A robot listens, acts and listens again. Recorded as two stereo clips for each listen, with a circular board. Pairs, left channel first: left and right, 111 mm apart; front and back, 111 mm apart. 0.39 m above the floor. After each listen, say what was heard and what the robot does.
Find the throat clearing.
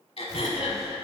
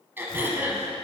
The throat clearing: 110° left. Turn 110° left.
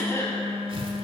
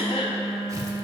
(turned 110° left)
The throat clearing is now 25° left. Turn 25° left.
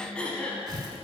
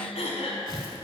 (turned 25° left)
The throat clearing is now 10° left. Turn 10° left.
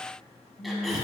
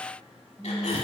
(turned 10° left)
Keep listening.
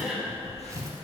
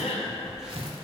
Facing the throat clearing.